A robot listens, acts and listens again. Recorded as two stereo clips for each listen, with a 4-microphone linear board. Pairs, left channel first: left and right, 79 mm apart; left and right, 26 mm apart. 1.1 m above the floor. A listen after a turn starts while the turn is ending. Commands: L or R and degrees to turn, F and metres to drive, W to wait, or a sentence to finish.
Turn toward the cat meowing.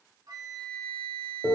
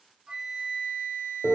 W
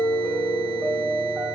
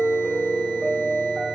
W
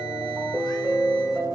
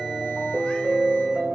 I can't make out a cat meowing to turn to.